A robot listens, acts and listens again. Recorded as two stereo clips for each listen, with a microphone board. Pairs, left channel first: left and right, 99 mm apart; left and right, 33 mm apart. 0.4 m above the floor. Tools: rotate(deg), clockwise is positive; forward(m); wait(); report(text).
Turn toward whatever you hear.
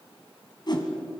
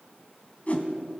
rotate(-45)
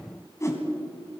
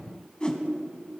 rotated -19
rotate(-30)
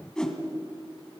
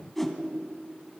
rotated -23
report("Found it: a whoosh, straight ahead, 2 to 4 m away.")